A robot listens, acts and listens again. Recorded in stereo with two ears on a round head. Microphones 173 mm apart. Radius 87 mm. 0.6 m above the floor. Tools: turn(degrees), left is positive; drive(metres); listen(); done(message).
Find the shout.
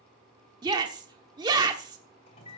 turn(degrees=-20)
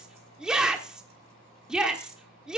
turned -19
done("Found it: a shout, straight ahead.")